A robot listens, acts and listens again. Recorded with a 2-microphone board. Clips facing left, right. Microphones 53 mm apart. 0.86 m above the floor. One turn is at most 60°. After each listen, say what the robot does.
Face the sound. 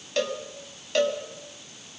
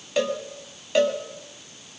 Turn 30° right.
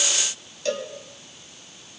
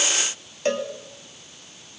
Turn 60° right.
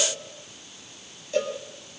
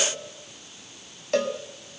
Turn 60° right.
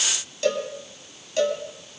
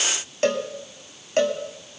Turn 45° right.
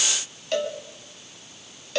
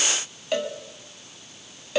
Turn 10° right.
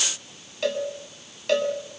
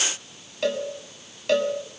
Facing the cowbell, 2 to 4 m away.